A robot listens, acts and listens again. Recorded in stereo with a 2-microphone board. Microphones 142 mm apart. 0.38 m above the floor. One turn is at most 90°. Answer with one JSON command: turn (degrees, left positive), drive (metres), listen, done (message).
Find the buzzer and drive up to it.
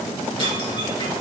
{"listen": true}
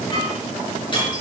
{"listen": true}
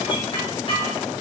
{"done": "I can't make out a buzzer, only dishes clattering."}